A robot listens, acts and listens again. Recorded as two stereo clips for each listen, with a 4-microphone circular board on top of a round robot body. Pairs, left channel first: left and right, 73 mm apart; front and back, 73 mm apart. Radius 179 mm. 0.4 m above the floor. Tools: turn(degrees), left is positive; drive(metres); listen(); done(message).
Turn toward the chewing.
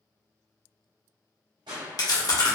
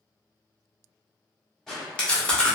turn(degrees=75)
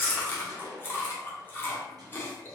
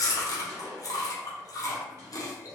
turn(degrees=30)
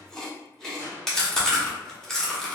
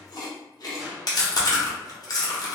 turn(degrees=10)
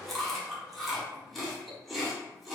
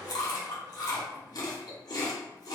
done("Facing the chewing, 1 to 2 m away.")